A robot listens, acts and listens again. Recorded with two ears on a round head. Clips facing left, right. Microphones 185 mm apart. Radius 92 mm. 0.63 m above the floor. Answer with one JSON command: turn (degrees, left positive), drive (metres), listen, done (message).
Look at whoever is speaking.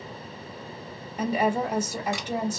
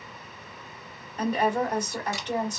{"turn": 30}
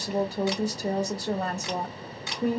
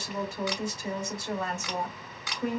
{"turn": 145}
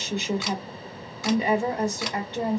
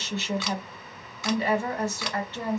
{"turn": 20}
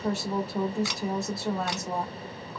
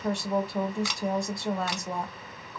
{"done": "Found it: a woman speaking, straight ahead."}